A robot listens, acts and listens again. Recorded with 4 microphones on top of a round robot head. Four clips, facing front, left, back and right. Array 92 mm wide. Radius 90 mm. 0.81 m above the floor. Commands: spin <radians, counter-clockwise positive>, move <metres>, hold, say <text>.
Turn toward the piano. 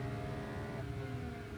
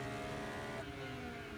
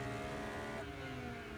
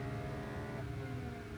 hold
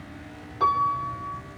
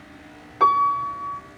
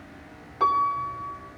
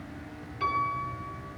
spin 1.66
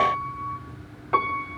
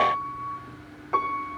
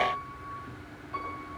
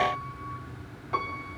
spin 0.44
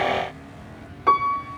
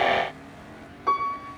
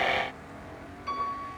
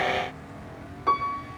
say Found it: a piano, straight ahead, 2 to 4 m away.